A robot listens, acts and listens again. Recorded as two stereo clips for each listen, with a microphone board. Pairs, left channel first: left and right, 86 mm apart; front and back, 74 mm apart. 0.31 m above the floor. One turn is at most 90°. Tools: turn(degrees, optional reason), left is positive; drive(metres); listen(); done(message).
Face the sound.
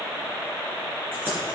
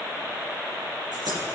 turn(degrees=-90, reason="The keys jangling: 155° right.")
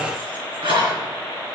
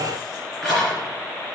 turn(degrees=-90, reason="The keys jangling is now 90° right.")
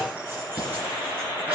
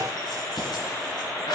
turn(degrees=-20, reason="The keys jangling is now 20° right.")
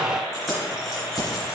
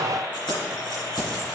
done("Found it: keys jangling, straight ahead.")